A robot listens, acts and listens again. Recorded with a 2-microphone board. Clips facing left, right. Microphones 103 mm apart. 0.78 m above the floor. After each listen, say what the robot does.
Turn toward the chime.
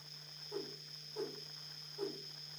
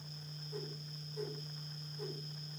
Keep listening.
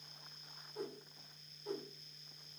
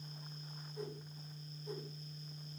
Keep listening.
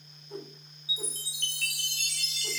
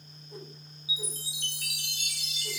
Turn 30° right.
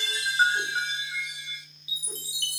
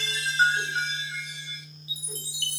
Turn 15° left.
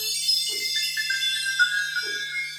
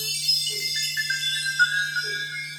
Found it: a chime, straight ahead.